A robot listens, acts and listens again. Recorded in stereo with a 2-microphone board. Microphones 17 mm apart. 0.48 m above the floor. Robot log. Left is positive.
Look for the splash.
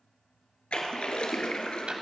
cmd yaw +90
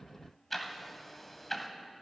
end: Facing where the splash came from. I can't hear it now.